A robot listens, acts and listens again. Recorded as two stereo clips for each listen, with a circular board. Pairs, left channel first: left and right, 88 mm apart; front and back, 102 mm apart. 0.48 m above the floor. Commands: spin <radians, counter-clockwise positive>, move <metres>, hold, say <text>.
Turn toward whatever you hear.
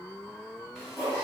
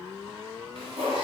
spin 3.05
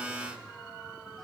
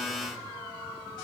hold
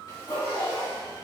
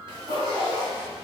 spin 0.96
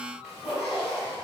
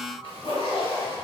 spin -0.17
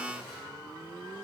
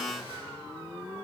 hold
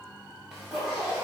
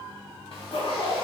say Found it: a zipper, straight ahead.